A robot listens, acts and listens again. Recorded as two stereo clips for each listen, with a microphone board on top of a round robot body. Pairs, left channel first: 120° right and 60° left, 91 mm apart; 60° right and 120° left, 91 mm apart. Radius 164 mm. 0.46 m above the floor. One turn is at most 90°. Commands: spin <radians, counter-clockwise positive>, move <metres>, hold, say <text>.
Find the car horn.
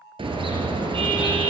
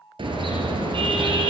spin 1.57
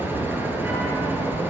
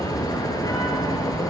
spin -0.17
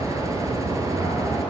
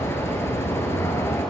say Found it: a car horn, straight ahead.